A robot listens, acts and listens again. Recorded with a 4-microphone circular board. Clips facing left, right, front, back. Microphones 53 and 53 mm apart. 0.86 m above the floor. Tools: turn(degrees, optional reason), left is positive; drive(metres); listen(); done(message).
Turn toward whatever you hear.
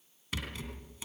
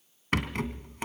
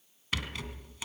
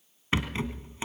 turn(degrees=-120, reason="The rattle: 120° right.")
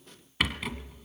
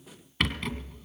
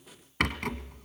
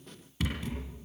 done("Facing the rattle.")